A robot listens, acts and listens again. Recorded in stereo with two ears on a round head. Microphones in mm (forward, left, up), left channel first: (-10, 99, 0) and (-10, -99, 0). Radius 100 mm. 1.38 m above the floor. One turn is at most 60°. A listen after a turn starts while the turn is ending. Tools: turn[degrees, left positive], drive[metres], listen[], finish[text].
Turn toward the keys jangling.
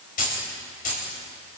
Thought: The keys jangling: about 40° left or 140° left.
Action: turn[40]
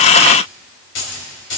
Thought: So it is at 115° left.
Action: turn[60]
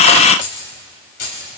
Thought: The keys jangling is now 85° left.
Action: turn[60]
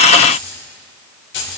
Thought: The keys jangling is now 60° left.
Action: turn[60]
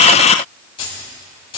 Thought: The keys jangling is now 25° left.
Action: turn[25]
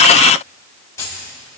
Thought: The keys jangling is now 15° left.
Action: turn[15]
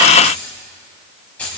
Action: finish[Found it: keys jangling, straight ahead, over 4 m away.]